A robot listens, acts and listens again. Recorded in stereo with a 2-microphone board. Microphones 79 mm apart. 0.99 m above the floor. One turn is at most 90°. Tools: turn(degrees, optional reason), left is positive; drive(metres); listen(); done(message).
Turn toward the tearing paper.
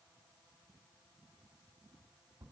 listen()
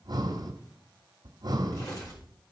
turn(degrees=50, reason="The tearing paper: about 50° left or 130° left.")
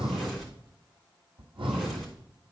done("Found it: tearing paper, straight ahead, 2 to 4 m away.")